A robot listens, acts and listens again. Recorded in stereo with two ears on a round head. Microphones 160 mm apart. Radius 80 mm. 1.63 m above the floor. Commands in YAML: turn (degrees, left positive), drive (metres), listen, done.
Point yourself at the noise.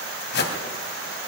turn: 65
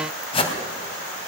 turn: 35
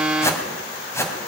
turn: 15
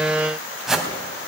done: "Facing the whoosh."